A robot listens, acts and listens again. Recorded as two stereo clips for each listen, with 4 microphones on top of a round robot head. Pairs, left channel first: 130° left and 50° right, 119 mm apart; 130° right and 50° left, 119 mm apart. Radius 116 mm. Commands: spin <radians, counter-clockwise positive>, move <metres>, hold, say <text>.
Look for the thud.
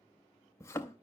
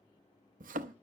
spin 1.05
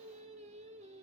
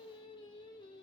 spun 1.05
say I heard a thud from this way, but can't make it out now.